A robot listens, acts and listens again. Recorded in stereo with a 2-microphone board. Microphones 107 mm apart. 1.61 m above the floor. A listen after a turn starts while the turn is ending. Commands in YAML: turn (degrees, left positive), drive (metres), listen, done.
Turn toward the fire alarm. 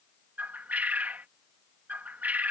listen: true
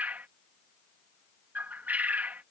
listen: true
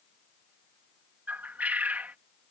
done: "I can't make out a fire alarm, only a bird."